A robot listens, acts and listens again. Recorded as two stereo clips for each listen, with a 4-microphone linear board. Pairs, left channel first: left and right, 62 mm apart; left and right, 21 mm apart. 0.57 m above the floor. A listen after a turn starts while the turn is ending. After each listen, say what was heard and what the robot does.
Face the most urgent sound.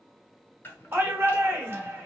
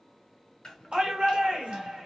The shout: about 40° right or 140° right. Turn 40° right.
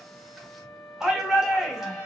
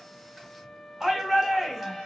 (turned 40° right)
So it is at 10° right. Turn 10° right.
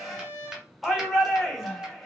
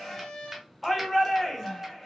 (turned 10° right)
Facing the shout, 1 to 2 m away.